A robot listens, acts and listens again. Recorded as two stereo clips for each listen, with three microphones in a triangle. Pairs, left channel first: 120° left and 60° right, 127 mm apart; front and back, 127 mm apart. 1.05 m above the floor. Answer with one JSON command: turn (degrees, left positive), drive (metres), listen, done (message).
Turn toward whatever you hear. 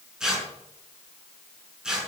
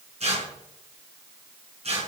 {"turn": -145}
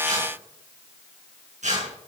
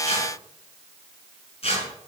{"turn": -40}
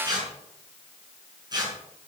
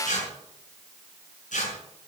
{"done": "Found it: tearing paper, straight ahead."}